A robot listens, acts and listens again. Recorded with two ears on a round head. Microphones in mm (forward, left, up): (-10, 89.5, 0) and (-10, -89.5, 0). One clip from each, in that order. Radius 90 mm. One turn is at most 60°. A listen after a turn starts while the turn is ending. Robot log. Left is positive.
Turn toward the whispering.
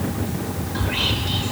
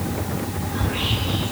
note: The whispering: about 65° left or 115° left.
cmd yaw +60
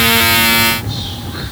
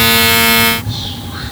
end: Found it: whispering, straight ahead.